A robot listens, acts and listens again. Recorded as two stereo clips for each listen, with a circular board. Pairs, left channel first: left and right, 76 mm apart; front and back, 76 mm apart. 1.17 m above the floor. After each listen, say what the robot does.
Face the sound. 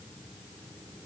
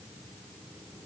Keep listening.
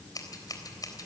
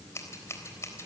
Turn 50° left.
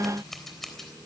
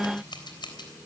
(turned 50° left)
Facing the scissors.